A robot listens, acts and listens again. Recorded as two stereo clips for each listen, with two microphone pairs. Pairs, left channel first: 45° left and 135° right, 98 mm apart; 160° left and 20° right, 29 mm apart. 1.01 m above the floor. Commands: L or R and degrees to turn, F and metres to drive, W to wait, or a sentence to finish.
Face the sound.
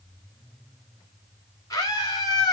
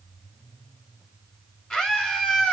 L95
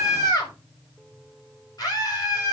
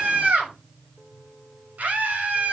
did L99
Facing the scream, over 4 m away.